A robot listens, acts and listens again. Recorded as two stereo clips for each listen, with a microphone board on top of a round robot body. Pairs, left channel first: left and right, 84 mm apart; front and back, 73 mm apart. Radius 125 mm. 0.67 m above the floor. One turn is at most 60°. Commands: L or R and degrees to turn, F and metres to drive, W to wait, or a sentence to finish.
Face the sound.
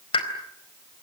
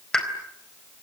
L60
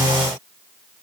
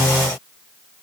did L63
L20
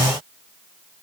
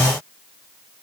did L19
I heard a pop from this way, but can't make it out now.